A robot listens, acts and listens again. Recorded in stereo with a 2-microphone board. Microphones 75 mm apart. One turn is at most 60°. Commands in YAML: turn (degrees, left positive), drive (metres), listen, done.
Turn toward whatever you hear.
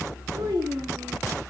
turn: -60
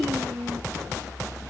turn: -60
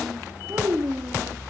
turn: -55
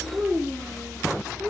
turn: -25
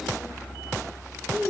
done: "Found it: a child speaking, straight ahead, 2 to 4 m away."